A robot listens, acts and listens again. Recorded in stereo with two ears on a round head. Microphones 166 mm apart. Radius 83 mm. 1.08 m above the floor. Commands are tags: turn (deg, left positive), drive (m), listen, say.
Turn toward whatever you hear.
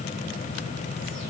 <listen/>
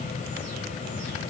<listen/>
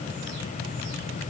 <say>I can't make out anything.</say>